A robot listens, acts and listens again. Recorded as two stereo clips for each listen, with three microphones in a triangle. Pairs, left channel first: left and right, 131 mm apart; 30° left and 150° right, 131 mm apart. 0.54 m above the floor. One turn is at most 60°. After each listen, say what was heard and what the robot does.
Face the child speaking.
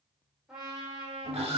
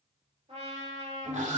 Keep listening.
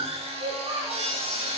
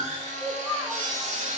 The child speaking: 60° right. Turn 60° right.
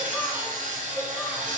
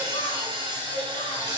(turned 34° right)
Nothing new. It was at 25° right. Turn 25° right.
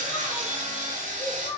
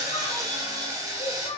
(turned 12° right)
The child speaking is now 70° left. Turn 60° left.
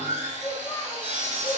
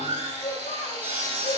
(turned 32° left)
The child speaking is now 40° left. Turn 40° left.
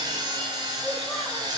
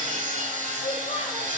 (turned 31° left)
Nothing new. It was at 10° left. Turn 10° left.
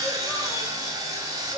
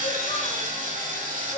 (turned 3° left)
Keep listening.
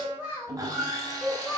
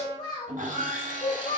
Facing the child speaking, 1 to 2 m away.